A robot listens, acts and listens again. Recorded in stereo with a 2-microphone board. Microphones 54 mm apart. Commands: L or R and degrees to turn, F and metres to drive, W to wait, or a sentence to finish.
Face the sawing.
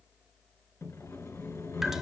L65
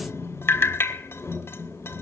L50
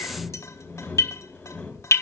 L20
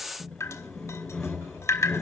L10
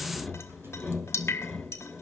Facing the sawing.